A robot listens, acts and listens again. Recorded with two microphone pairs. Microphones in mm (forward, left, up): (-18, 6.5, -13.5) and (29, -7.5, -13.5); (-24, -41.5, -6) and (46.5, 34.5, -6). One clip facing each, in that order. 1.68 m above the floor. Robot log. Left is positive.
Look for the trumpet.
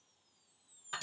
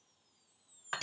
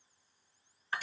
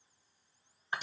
cmd idle
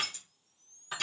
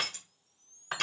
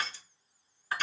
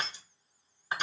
cmd idle
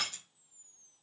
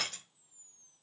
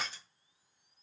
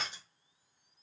end: I can't make out a trumpet, only crushing.